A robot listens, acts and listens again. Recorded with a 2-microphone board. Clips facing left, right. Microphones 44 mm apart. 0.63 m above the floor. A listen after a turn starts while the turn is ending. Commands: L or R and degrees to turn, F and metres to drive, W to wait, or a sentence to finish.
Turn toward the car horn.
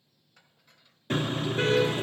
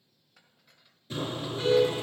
L60
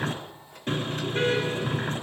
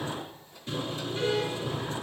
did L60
L65
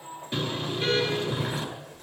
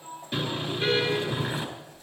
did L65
Facing the car horn, over 4 m away.